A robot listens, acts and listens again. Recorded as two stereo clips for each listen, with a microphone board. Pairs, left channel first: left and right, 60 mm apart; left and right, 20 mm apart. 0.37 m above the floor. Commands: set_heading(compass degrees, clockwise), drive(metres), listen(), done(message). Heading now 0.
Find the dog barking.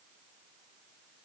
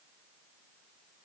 listen()
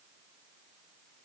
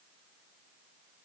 listen()
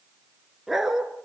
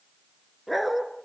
set_heading(30)
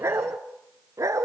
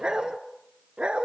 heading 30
set_heading(150)
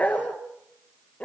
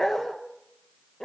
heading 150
set_heading(130)
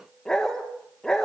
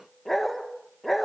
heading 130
set_heading(120)
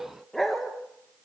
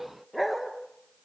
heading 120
done("Facing the dog barking.")